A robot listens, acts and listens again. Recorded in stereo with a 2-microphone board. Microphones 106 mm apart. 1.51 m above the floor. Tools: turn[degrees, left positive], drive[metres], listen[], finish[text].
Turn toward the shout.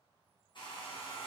Action: listen[]
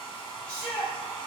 Thought: The shout: about 65° left or 115° left.
Action: turn[65]
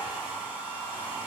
Action: listen[]
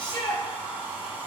Thought: So it is at 45° left.
Action: turn[45]
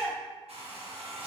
Thought: The shout is now 20° right.
Action: turn[-20]
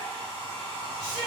Action: finish[Facing the shout.]